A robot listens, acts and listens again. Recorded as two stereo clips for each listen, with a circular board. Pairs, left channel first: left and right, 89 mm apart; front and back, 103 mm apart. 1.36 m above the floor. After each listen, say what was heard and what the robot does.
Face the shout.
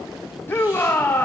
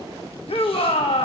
The shout: 25° left. Turn 25° left.
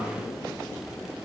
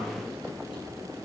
Keep listening.
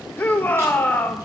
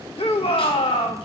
The shout is now 20° left. Turn 20° left.
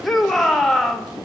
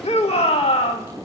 Found it: a shout, straight ahead, 1 to 2 m away.